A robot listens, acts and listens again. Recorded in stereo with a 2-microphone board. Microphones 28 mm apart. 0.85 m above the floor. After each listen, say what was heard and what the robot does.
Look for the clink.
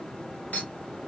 Turn 90° left.
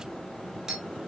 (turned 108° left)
So it is at 20° right. Turn 20° right.
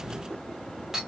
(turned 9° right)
The clink is now 15° right. Turn 15° right.
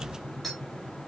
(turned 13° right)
Facing the clink, 1 to 2 m away.